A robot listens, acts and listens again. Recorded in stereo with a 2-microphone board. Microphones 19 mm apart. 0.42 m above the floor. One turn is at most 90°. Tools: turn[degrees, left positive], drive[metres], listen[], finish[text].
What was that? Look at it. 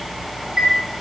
Thought: The chime: about 30° right or 150° right.
Action: turn[-30]
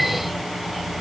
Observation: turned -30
Action: listen[]
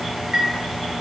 Thought: So it is at 120° right.
Action: turn[-90]
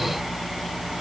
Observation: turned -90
Thought: Nothing new. It was at 30° right.
Action: turn[-30]
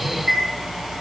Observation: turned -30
Action: finish[Found it: a chime, straight ahead.]